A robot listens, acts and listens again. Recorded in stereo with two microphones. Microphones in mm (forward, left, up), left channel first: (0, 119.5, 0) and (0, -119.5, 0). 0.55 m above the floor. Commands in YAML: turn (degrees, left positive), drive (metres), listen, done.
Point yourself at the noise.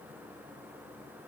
listen: true
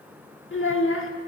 turn: 60
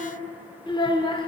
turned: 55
turn: 25
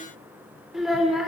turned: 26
done: "Found it: a child speaking, straight ahead, 1 to 2 m away."